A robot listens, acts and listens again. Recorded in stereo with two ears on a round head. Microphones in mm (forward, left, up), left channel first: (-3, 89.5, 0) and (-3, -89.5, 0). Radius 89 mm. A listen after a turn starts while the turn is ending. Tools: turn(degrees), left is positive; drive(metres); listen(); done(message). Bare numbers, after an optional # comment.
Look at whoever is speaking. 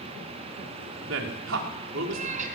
# The man speaking: about 70° right or 110° right.
turn(-70)
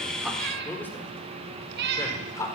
# So it is at 15° left.
turn(15)
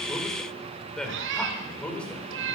done("Found it: a man speaking, straight ahead.")